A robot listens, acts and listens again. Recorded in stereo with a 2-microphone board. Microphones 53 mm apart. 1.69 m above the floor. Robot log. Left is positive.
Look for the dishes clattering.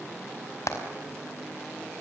cmd idle
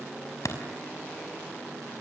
cmd idle
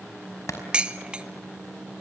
note: The dishes clattering: about 20° right or 160° right.
cmd yaw -20
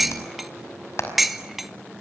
end: Facing the dishes clattering, 1 to 2 m away.